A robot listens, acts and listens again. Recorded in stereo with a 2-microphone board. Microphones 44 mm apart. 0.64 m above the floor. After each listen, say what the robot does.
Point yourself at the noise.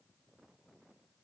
Keep listening.
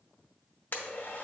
Turn 50° left.
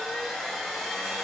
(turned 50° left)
Facing the blender.